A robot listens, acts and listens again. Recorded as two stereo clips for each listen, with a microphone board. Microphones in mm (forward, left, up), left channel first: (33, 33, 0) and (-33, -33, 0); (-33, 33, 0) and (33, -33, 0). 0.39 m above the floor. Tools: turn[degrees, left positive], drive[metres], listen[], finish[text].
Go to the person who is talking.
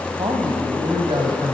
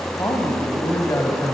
Thought: The man speaking: 165° right.
Action: turn[-165]
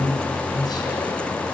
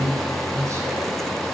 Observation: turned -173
Action: drive[1.0]
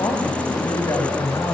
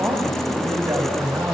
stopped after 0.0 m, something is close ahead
Thought: The man speaking is now 10° left.
Action: turn[10]
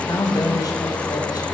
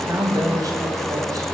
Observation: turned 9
Action: finish[Something is in my way. I am facing the man speaking but have not reached it.]